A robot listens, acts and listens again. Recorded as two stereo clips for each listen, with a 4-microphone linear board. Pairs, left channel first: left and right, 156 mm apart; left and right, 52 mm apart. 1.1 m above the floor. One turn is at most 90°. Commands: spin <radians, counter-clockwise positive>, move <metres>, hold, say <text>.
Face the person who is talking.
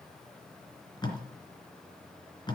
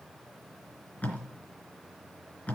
hold
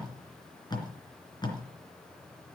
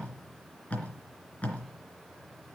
hold
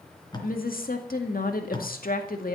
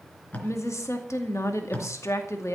spin 1.22
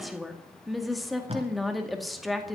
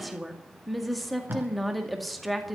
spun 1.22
say Found it: a woman speaking, straight ahead.